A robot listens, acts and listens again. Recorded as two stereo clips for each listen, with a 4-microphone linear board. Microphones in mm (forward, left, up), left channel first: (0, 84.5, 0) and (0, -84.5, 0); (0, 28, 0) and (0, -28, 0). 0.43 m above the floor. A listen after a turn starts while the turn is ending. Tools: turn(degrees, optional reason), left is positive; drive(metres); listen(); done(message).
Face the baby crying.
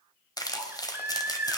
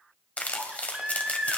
turn(degrees=-30)
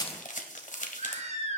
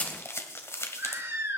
turn(degrees=-140, reason="So it is at 140° right.")
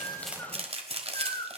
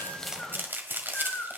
turn(degrees=30, reason="The baby crying is now 30° left.")
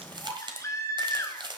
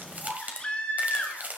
turn(degrees=20, reason="The baby crying is now 20° left.")
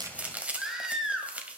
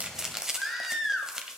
done("Facing the baby crying.")